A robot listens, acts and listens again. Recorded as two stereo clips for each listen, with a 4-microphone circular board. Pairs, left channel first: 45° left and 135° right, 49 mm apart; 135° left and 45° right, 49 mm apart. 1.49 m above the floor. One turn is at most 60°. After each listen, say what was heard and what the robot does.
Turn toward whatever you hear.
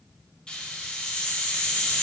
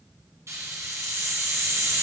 The hiss: 25° right. Turn 25° right.
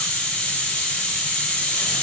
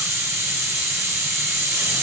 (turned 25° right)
The hiss is now 20° right. Turn 20° right.
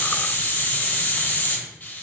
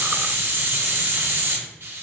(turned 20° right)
Facing the hiss, under 1 m away.